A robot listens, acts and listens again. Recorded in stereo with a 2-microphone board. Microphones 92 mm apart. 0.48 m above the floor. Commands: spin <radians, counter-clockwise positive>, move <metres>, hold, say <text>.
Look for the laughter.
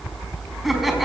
spin 0.52
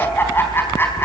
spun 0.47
spin 2.71
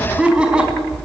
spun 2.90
spin -0.17
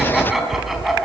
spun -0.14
say Found it: laughter, straight ahead, over 4 m away.